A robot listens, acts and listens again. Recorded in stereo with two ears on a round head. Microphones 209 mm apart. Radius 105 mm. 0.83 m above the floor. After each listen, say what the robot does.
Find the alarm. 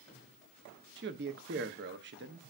Keep listening.
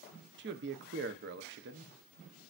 Keep listening.
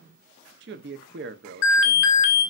Turn 60° left.
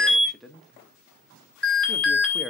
Facing the alarm, 2 to 4 m away.